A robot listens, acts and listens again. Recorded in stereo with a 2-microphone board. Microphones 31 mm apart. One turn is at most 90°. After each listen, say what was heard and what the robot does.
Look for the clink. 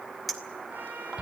Turn 30° left.
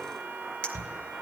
So it is at 150° left. Turn 90° left.
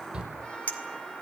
The clink is now 65° left. Turn 65° left.
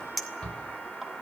Facing the clink, 2 to 4 m away.